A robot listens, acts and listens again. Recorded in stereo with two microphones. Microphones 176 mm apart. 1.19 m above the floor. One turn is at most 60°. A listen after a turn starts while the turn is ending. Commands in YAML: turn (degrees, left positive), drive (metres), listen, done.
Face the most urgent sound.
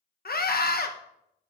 turn: 60
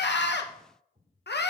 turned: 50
turn: 60
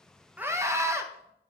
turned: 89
turn: -15
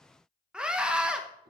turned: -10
done: "Facing the scream, under 1 m away."